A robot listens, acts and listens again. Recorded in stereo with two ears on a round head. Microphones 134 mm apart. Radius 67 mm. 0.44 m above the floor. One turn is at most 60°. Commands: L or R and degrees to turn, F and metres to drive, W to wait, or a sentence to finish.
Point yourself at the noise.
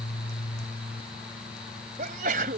R60
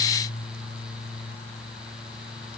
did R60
W
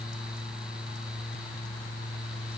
I heard a sneeze, but can't make it out now. It was about straight ahead or 60° right.